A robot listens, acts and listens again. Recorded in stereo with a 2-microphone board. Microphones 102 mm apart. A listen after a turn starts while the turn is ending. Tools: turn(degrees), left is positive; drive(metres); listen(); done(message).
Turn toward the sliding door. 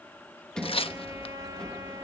turn(degrees=30)
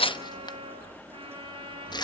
listen()
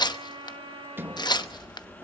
turn(degrees=-25)
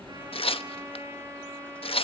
listen()
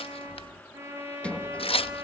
turn(degrees=10)
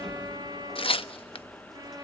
done("Found it: a sliding door, straight ahead.")